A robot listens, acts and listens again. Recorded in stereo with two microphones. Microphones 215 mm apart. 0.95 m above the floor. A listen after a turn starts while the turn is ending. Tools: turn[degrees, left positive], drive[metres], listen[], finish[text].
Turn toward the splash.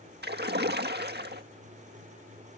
Thought: The splash: about 50° right or 130° right.
Action: turn[-50]
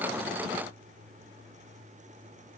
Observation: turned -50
Action: listen[]
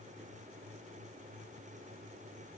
Action: finish[I heard a splash, but can't make it out now. It was about straight ahead or 80° right.]